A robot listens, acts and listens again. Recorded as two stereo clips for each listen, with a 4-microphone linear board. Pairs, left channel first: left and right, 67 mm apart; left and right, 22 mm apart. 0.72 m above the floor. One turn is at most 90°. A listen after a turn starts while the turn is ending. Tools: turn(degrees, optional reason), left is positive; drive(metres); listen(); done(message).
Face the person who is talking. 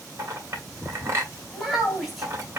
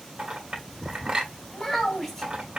turn(degrees=30)
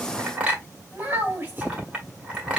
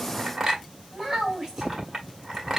turn(degrees=-25, reason="So it is at 25° right.")
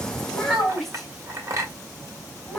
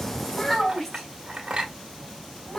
done("Found it: a child speaking, straight ahead.")